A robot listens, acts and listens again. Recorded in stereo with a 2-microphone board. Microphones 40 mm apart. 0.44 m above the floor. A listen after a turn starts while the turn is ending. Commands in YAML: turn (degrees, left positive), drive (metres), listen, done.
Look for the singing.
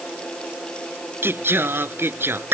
turn: -90
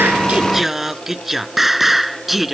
done: "Found it: singing, straight ahead."